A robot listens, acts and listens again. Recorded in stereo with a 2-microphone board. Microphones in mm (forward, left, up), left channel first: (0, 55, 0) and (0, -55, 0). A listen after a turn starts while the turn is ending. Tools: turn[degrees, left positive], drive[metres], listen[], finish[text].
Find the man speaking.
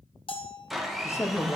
Thought: The man speaking: about 25° left or 155° left.
Action: turn[25]
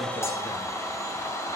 Action: listen[]
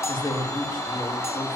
Thought: The man speaking: about 40° left or 140° left.
Action: turn[40]
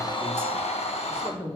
Thought: So it is at 110° left.
Action: turn[110]
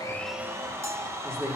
Thought: The man speaking is now 25° right.
Action: turn[-25]
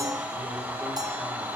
Action: listen[]
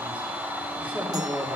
Thought: The man speaking is now 15° right.
Action: turn[-15]
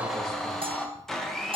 Action: listen[]
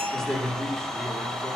Action: finish[Facing the man speaking.]